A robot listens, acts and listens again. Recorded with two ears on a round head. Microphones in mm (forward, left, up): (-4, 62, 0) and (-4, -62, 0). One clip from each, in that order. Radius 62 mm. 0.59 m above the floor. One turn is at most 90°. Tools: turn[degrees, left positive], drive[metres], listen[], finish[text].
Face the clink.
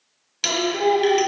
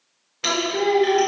Thought: The clink: about 70° left or 110° left.
Action: turn[70]
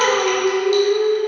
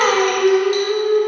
Action: listen[]
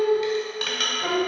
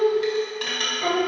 Thought: So it is at 20° left.
Action: turn[20]
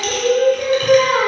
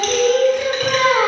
Action: listen[]
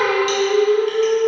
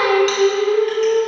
Action: listen[]
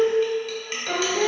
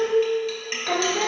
Action: finish[Found it: a clink, straight ahead.]